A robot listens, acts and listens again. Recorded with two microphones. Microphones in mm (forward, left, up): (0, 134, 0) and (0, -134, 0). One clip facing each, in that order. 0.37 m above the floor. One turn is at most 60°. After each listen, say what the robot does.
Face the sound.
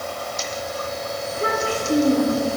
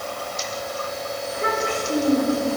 Turn 35° left.
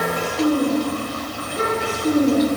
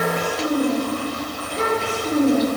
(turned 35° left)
Turn 15° left.
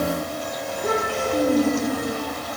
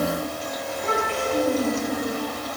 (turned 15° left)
Turn 10° left.
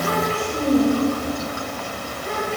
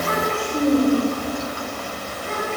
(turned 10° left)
Facing the child speaking, over 4 m away.